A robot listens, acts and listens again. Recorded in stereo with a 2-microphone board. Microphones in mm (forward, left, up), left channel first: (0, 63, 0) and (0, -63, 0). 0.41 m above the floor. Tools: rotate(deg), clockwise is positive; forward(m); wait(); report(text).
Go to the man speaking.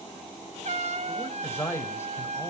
rotate(-20)
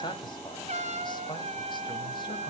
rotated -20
rotate(-140)
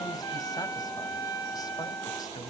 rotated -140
rotate(-35)
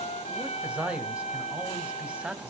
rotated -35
rotate(10)
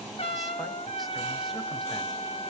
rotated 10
wait()
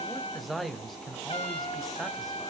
forward(1.0)
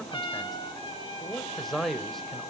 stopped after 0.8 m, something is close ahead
report("Arrived at the man speaking, straight ahead.")